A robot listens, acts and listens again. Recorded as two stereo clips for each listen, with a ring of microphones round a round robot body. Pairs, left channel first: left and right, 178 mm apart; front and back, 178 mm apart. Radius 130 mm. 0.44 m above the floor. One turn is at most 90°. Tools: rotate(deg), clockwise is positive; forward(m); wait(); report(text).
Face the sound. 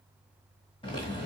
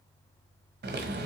rotate(-90)
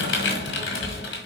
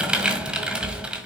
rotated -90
rotate(-90)
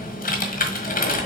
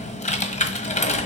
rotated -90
rotate(-50)
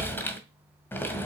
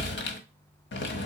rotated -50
rotate(-10)
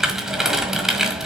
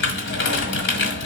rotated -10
report("Facing the typing on a keyboard.")